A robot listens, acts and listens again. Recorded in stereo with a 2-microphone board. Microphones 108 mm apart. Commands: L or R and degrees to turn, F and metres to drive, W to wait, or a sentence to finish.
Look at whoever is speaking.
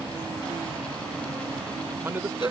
R20
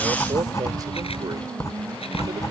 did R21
W
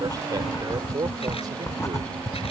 R135
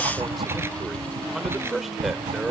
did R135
Facing the man speaking.